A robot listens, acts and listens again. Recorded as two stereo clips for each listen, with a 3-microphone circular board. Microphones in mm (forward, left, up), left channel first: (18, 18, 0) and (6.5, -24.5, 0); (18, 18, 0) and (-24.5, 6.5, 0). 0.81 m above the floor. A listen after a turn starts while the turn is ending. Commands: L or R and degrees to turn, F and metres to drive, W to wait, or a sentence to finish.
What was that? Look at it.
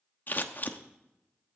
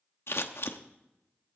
L35
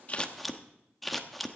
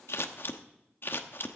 R15
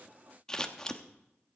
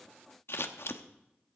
Found it: scissors, straight ahead.